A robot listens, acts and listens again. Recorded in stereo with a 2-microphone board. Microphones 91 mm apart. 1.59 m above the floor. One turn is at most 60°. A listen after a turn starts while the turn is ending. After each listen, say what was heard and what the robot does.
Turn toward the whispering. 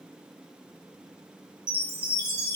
Keep listening.
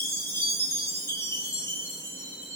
Keep listening.
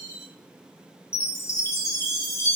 I can't make out whispering, only a chime.